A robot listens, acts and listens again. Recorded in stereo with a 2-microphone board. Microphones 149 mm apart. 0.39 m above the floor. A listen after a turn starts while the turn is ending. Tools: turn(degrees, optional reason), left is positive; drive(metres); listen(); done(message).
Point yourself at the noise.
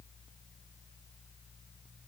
listen()
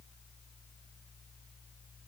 listen()
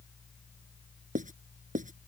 turn(degrees=-60, reason="The writing: about 60° right or 120° right.")
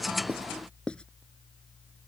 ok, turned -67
done("Found it: writing, straight ahead.")